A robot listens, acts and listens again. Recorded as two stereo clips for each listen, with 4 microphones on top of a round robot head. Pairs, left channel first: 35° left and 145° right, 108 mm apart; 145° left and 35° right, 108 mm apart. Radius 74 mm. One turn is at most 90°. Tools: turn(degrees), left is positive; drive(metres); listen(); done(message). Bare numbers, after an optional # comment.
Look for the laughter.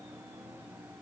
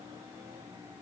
listen()
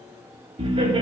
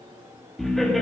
# The laughter: 125° right.
turn(-90)
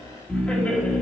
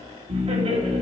# The laughter is now 40° right.
turn(-40)
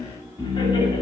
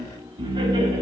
done("Found it: laughter, straight ahead.")